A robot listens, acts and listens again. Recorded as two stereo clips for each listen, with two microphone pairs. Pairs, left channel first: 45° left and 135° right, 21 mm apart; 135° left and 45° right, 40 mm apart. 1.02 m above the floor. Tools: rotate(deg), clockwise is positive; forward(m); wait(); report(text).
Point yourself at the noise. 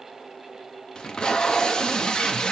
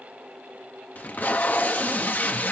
rotate(-90)
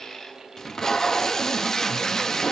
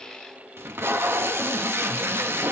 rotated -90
rotate(25)
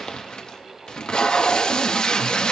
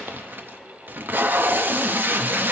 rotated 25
report("Facing the tape being pulled.")